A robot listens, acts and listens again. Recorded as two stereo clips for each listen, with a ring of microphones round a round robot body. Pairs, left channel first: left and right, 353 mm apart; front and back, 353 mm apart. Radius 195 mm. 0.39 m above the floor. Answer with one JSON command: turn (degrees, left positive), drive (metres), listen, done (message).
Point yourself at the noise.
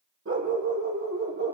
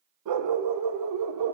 {"turn": -145}
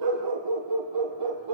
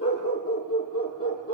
{"turn": -55}
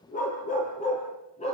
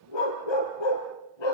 {"turn": 15}
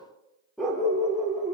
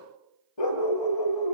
{"done": "Facing the dog barking."}